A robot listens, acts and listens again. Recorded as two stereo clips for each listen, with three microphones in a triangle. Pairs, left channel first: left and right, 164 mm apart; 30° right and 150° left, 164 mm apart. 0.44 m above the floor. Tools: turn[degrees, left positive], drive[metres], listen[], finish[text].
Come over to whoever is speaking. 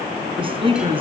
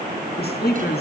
Thought: The woman speaking: 35° right.
Action: turn[-35]
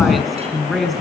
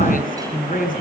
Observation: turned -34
Action: drive[1.0]
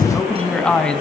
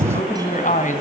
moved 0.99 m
Action: drive[1.0]
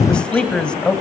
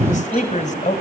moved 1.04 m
Action: drive[1.0]
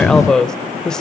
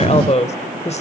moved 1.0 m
Action: drive[1.0]
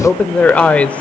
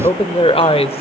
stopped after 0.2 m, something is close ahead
Thought: The woman speaking is now 10° left.
Action: turn[10]
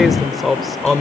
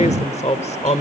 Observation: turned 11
Action: finish[I am next to the woman speaking.]